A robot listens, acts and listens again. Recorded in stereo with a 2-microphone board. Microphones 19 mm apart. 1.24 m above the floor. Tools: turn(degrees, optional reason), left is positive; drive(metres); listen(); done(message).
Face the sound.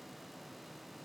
listen()
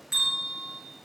turn(degrees=-30, reason="The bell: about 30° right or 150° right.")
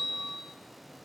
turn(degrees=-120, reason="So it is at 120° right.")
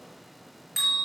turn(degrees=-15, reason="The bell is now 15° right.")
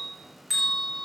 done("Found it: a bell, straight ahead, over 4 m away.")